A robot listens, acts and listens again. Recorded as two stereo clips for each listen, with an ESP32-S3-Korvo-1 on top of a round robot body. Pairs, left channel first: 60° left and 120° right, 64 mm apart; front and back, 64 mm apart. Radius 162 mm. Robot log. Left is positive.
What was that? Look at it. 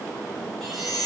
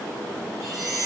note: The chime: 145° left.
cmd yaw +145
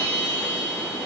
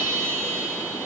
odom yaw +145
end: Facing the chime, 2 to 4 m away.